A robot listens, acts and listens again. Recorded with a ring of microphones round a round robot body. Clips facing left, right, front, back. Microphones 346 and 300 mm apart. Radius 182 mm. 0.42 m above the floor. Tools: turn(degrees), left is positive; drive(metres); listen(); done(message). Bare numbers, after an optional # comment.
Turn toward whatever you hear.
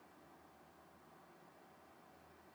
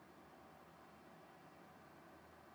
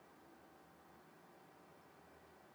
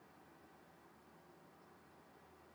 listen()
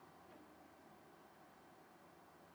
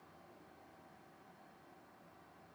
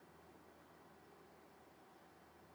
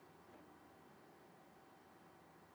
listen()
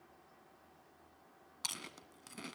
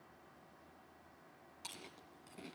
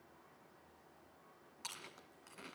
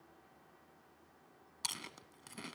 # The chewing: 150° left.
turn(150)
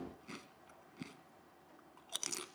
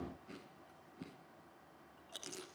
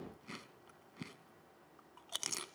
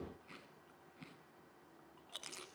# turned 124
# The chewing is now 25° left.
turn(25)
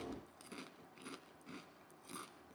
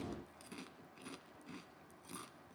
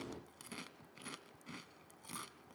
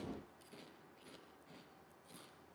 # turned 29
done("Found it: chewing, straight ahead, 1 to 2 m away.")